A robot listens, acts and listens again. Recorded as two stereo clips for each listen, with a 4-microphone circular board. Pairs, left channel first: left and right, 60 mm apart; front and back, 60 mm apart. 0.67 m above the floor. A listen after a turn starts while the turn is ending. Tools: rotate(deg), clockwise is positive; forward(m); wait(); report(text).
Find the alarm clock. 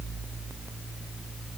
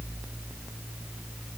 wait()
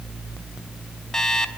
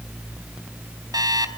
rotate(-170)
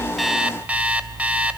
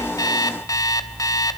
rotate(20)
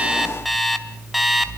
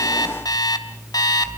report("Found it: an alarm clock, straight ahead.")